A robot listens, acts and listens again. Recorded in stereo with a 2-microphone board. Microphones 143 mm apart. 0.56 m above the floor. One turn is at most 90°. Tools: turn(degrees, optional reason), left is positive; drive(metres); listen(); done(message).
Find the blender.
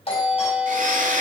turn(degrees=-65, reason="The blender: about 65° right or 115° right.")
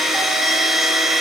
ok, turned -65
done("Facing the blender, 1 to 2 m away.")